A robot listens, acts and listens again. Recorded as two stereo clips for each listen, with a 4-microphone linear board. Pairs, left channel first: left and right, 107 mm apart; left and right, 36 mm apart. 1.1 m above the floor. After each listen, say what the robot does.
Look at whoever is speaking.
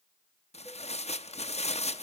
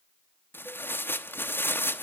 Keep listening.
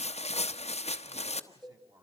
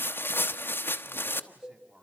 Turn 35° right.
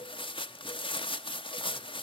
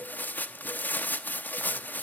Keep listening.
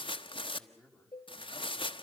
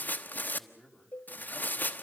Facing the man speaking.